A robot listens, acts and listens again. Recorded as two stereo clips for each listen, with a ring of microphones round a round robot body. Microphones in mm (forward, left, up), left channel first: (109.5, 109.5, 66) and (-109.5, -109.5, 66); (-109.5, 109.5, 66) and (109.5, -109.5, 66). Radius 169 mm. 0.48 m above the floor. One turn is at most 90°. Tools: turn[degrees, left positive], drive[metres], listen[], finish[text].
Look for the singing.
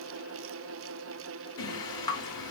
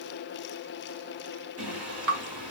Action: finish[Found it: singing, straight ahead.]